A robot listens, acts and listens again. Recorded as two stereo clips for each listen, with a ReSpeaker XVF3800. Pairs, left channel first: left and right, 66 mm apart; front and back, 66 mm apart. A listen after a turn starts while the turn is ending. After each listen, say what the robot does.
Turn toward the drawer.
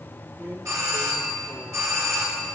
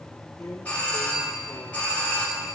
Turn 35° right.
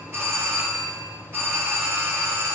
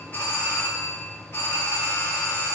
Keep listening.
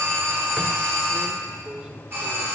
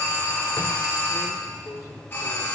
Turn 15° right.
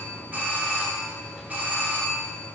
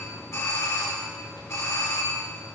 Keep listening.
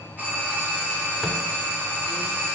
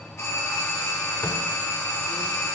Keep listening.
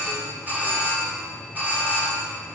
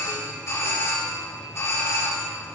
Facing where the drawer came from. I can't hear it now.